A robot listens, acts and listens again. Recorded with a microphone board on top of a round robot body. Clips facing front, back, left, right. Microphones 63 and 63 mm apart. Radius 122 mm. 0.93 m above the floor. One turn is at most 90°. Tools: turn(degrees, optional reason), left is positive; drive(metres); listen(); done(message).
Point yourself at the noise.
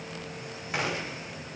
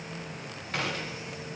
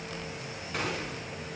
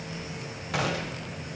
turn(degrees=-75, reason="The gunshot: 75° right.")
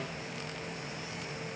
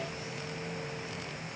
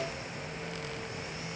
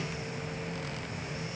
done("Facing where the gunshot came from. I can't hear it now.")